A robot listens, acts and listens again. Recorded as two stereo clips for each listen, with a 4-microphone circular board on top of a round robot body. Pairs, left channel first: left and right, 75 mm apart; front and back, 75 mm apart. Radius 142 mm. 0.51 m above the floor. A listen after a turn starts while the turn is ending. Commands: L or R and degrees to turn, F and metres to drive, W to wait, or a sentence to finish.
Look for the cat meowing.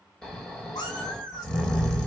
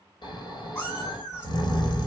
L55
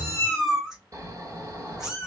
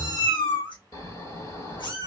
R10
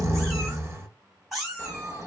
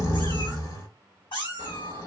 Found it: a cat meowing, straight ahead, 2 to 4 m away.